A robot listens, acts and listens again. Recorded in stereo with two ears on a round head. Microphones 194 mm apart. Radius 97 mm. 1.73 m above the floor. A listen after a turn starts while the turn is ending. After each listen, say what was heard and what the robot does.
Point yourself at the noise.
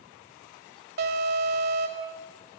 The alarm: about 50° right or 130° right. Turn 50° right.
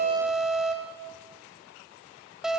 Facing the alarm.